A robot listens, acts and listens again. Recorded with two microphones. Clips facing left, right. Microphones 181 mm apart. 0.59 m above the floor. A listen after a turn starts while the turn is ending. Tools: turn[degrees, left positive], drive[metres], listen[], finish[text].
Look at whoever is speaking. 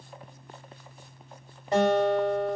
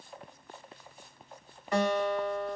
Action: listen[]
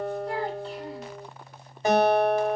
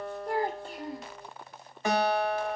Thought: The child speaking: about 45° right or 135° right.
Action: turn[-45]
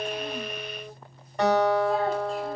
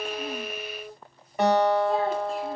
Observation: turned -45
Action: listen[]
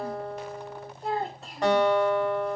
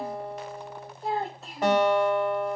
Action: finish[Facing the child speaking, under 1 m away.]